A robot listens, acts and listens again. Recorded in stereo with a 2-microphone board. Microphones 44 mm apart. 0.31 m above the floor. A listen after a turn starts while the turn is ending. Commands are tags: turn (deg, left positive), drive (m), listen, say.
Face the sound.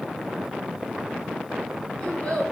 <turn deg="20"/>
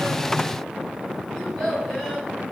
<say>Found it: a child speaking, straight ahead.</say>